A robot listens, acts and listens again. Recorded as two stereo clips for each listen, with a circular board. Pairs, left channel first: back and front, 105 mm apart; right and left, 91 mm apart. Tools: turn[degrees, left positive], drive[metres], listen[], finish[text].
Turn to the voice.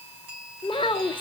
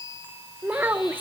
Thought: The child speaking: 155° left.
Action: turn[155]
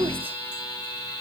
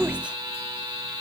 Thought: The child speaking is now 15° left.
Action: turn[15]
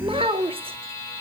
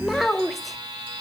Action: finish[Facing the child speaking.]